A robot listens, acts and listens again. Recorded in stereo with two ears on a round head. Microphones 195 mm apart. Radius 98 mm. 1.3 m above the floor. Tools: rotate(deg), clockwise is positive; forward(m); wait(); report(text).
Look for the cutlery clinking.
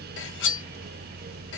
rotate(-60)
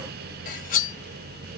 rotate(-45)
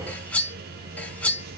report("Facing the cutlery clinking.")